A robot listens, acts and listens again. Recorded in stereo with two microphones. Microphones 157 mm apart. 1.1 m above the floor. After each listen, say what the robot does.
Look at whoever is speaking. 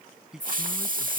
Turn 30° right.
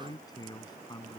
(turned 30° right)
Turn 25° left.
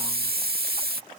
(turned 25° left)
Keep listening.
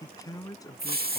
Turn 20° left.
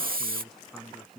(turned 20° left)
Found it: a man speaking, straight ahead.